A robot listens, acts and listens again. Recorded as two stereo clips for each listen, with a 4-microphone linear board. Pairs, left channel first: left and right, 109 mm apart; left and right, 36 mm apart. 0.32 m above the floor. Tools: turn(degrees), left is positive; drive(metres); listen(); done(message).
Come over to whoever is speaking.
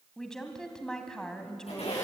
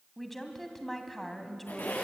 turn(degrees=30)
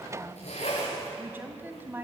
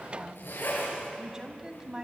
turn(degrees=-25)
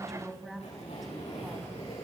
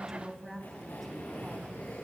drive(metres=1.0)
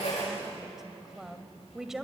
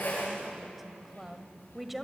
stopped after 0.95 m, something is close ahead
done("Arrived at the woman speaking, straight ahead.")